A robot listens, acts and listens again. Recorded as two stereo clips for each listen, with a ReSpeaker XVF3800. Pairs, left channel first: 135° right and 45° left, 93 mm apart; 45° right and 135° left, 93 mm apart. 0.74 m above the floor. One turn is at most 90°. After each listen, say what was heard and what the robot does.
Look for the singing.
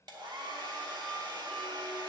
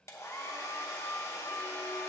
Keep listening.
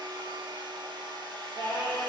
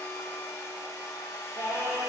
The singing: 80° left. Turn 80° left.
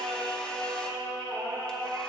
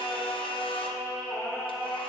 The singing is now 15° left. Turn 15° left.
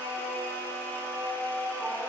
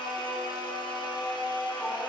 Facing the singing, over 4 m away.